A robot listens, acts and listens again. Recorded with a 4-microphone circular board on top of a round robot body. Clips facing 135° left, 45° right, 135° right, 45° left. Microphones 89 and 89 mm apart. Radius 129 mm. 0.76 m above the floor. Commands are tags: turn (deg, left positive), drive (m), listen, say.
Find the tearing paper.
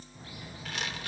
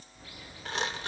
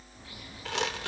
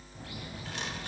<turn deg="-105"/>
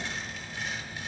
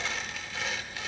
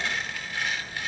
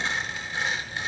<turn deg="-25"/>
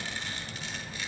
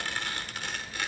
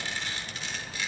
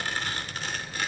<say>Facing the tearing paper.</say>